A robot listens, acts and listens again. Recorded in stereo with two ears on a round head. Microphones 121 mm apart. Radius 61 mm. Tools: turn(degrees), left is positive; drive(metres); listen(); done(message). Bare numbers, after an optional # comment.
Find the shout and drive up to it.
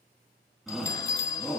turn(30)
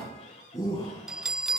# So it is at 150° left.
turn(150)
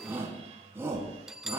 # The shout is now 20° right.
turn(-20)
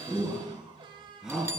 drive(1.0)
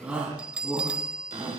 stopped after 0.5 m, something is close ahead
# The shout is now 10° right.
turn(-10)
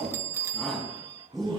done("Blocked. The shout is further on, straight ahead.")